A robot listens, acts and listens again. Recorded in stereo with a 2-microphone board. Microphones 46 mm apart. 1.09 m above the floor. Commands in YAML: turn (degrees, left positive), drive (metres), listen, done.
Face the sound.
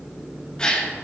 turn: 20
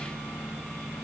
listen: true
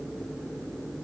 done: "I heard a gasp, but can't make it out now. It was about straight ahead or 140° left."